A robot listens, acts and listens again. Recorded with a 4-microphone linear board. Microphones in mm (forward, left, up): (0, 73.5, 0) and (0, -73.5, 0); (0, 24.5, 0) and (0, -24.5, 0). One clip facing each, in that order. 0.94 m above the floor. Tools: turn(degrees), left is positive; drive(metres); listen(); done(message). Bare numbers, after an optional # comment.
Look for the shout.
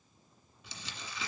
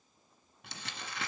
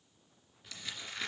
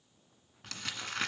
listen()
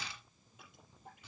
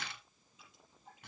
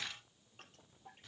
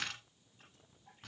listen()
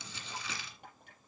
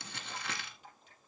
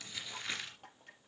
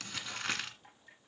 done("I can't make out a shout to turn to.")